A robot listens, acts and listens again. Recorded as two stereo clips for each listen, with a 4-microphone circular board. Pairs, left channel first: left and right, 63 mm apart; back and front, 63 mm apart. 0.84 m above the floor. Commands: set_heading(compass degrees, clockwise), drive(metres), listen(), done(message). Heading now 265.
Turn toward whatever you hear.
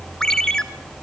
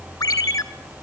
set_heading(95)
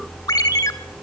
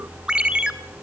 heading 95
set_heading(20)
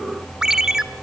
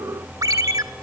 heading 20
set_heading(30)
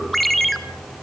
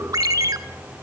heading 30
done("Found it: a ringtone, straight ahead.")